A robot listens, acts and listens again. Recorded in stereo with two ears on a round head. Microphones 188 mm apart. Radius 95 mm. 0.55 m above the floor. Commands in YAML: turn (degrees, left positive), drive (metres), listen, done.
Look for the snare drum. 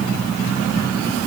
listen: true
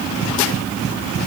listen: true
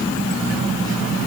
done: "I can't make out a snare drum to turn to."